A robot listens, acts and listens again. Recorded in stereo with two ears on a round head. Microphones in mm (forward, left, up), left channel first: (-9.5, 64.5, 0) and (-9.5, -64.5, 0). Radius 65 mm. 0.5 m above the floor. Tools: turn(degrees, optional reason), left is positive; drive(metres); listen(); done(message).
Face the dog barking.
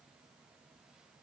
listen()
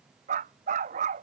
turn(degrees=-55, reason="The dog barking: about 55° right or 125° right.")
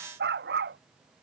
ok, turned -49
turn(degrees=-75, reason="So it is at 75° right.")
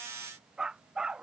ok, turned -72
done("Facing the dog barking.")